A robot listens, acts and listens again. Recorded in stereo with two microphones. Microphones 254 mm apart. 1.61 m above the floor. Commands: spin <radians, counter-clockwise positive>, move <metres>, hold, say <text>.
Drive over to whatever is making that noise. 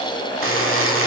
spin -1.05
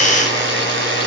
spin -0.96
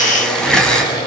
move 1.0
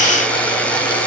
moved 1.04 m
move 1.0
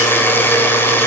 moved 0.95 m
spin 0.17
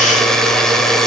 move 1.0
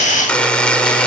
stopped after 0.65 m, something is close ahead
say Arrived at the buzzer, straight ahead.